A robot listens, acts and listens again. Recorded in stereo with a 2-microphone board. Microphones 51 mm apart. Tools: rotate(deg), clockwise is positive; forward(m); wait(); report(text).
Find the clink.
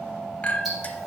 rotate(-30)
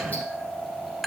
report("Found it: a clink, straight ahead.")